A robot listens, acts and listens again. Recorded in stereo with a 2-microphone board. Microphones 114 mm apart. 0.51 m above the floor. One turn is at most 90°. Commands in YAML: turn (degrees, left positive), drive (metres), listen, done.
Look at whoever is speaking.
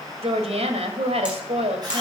turn: -65
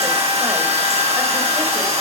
listen: true
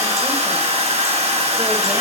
listen: true
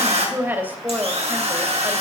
turn: -20
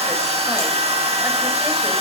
listen: true
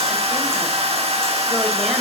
listen: true
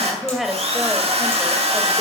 done: "Found it: a woman speaking, straight ahead, 2 to 4 m away."